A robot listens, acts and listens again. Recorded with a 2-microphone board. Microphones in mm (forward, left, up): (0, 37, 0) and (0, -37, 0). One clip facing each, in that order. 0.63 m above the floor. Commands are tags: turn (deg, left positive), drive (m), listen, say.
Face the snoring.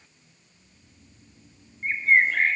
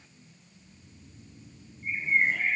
<turn deg="30"/>
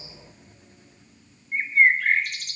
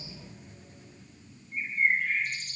<turn deg="120"/>
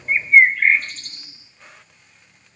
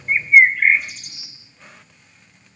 <listen/>
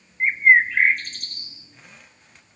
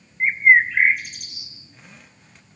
<listen/>
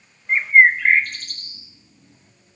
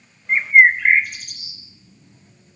<turn deg="45"/>
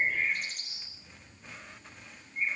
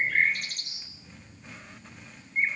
<say>Facing the snoring.</say>